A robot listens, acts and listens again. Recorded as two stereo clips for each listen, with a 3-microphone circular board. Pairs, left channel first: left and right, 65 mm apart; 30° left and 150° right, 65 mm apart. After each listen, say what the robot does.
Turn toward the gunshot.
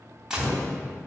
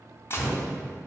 Turn 10° right.
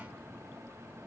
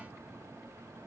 Facing where the gunshot came from. I can't hear it now.